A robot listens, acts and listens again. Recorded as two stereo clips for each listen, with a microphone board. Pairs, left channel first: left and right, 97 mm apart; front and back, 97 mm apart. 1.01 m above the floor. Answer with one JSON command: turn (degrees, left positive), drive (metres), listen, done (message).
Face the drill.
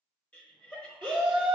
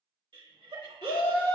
{"listen": true}
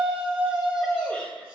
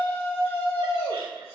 {"listen": true}
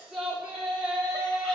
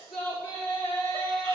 {"done": "I can't make out a drill to turn to."}